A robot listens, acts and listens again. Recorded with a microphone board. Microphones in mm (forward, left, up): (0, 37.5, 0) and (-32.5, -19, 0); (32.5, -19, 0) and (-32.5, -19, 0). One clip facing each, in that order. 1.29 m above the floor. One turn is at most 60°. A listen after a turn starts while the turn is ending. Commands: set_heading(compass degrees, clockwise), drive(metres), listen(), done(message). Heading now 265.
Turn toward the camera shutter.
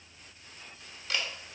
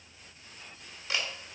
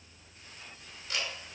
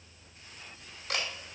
set_heading(205)
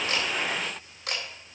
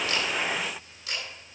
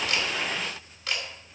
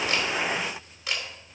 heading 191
set_heading(131)
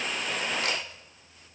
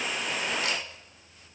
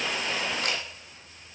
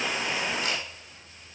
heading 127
set_heading(97)
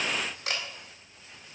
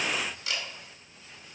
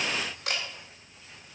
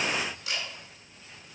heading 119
set_heading(94)
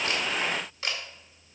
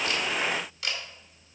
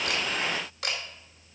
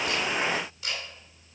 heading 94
done("Facing the camera shutter.")